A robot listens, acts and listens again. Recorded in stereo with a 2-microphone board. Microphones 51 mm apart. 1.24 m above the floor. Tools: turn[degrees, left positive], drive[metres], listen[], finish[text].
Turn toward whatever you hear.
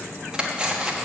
Thought: The cutlery clinking: about 15° right or 165° right.
Action: turn[-15]
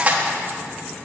Thought: So it is at 150° right.
Action: turn[-150]
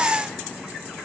Action: listen[]
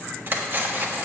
Thought: The cutlery clinking is now 45° right.
Action: turn[-45]
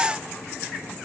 Action: listen[]
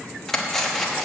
Action: finish[Facing the cutlery clinking, 1 to 2 m away.]